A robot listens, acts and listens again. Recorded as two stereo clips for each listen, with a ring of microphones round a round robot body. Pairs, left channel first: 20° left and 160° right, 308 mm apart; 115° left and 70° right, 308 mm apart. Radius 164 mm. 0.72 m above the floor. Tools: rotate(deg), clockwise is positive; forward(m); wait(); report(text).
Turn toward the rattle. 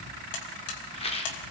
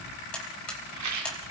rotate(45)
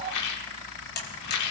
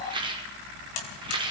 report("Facing the rattle, 2 to 4 m away.")